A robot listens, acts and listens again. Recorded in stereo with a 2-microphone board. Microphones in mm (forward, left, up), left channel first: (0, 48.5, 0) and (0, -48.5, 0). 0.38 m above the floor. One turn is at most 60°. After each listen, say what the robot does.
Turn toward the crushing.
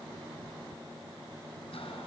Keep listening.
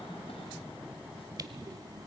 Turn 40° right.
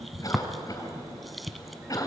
Found it: crushing, straight ahead, under 1 m away.